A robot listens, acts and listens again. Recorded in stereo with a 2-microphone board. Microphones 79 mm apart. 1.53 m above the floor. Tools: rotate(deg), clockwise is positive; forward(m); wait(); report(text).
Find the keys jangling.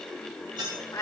rotate(65)
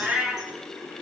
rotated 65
wait()
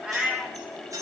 rotate(45)
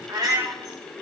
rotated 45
wait()
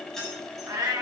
report("Facing the keys jangling, over 4 m away.")